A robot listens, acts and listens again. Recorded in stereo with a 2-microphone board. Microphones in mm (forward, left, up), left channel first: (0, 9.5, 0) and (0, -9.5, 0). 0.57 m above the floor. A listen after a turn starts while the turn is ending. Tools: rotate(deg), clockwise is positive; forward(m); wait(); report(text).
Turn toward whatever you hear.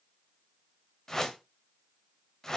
rotate(-25)
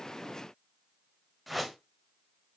report("Facing the whoosh.")